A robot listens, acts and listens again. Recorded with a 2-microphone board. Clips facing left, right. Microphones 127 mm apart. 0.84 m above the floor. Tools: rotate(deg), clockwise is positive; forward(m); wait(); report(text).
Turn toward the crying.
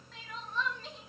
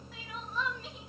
rotate(30)
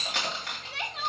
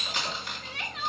rotate(-25)
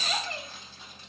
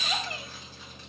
report("Facing the crying, under 1 m away.")